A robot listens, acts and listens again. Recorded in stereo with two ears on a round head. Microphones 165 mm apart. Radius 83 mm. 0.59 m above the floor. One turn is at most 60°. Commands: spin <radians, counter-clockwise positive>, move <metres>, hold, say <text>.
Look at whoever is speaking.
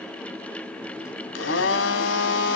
hold
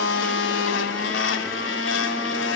hold
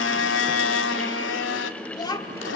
spin 0.44
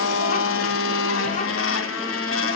hold
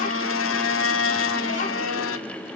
hold
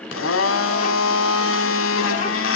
say I heard a child speaking, but can't make it out now. It was about straight ahead or 130° left.